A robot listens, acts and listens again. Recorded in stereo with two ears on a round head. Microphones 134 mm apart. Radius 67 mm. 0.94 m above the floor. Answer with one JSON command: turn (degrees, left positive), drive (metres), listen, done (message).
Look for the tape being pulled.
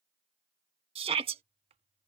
{"listen": true}
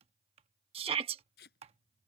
{"turn": 70}
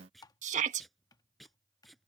{"done": "Found it: tape being pulled, straight ahead."}